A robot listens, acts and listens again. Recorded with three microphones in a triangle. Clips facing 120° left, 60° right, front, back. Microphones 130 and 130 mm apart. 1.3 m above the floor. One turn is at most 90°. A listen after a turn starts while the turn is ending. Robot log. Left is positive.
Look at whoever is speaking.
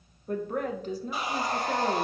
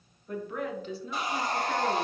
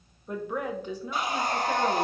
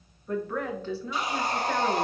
note: The woman speaking: 75° left.
cmd yaw +75
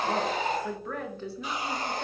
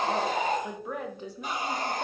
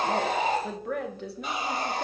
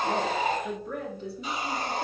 note: The woman speaking is now 15° left.
cmd yaw +15
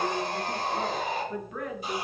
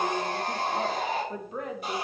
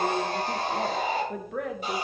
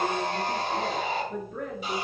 end: Facing the woman speaking, under 1 m away.